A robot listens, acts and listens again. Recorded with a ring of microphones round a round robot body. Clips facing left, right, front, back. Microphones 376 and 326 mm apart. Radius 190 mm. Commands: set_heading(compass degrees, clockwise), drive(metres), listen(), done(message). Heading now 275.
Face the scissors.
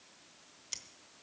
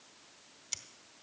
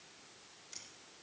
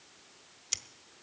set_heading(90)
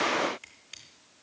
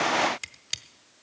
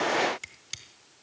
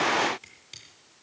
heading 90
set_heading(155)
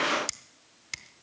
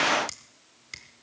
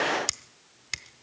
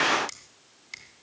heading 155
set_heading(140)
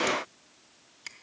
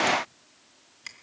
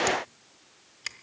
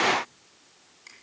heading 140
done("Found it: scissors, straight ahead, 1 to 2 m away.")